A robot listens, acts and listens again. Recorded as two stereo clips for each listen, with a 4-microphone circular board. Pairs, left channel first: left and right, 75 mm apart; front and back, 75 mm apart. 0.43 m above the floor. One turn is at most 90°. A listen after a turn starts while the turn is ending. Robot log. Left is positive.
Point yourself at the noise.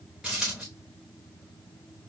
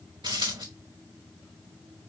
note: The dropped coin: 175° right.
cmd yaw -90
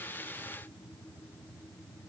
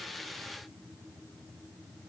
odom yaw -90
note: Nothing new. It was at 85° right.
cmd yaw -85
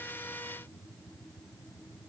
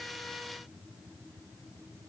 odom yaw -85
end: I heard a dropped coin from this way, but can't make it out now.